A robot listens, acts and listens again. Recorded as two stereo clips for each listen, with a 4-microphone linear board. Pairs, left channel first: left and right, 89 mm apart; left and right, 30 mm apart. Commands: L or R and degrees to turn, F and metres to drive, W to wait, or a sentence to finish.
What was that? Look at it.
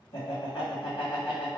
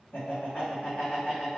L90
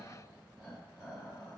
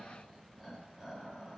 Facing the laughter, 1 to 2 m away.